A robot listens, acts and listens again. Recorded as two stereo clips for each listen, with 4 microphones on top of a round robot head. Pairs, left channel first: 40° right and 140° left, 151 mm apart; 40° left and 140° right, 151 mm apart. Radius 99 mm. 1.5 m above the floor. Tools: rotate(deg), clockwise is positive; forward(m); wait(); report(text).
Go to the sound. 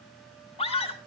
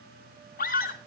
rotate(-10)
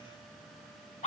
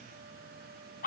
forward(1.0)
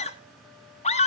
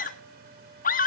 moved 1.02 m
rotate(-10)
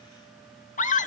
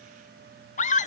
forward(1.0)
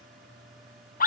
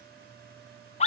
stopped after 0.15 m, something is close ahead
rotate(10)
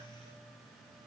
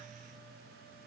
wait()
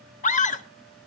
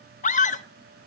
report("Arrived at the scream, straight ahead.")